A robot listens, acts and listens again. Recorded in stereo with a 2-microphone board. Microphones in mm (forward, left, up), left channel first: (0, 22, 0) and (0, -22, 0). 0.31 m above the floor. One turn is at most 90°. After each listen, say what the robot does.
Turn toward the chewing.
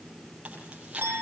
Turn 25° right.
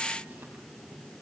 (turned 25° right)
Keep listening.
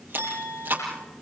Turn 90° right.
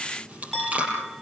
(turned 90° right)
Turn 30° right.
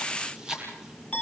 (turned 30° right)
Turn 15° right.
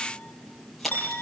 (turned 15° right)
Found it: chewing, straight ahead.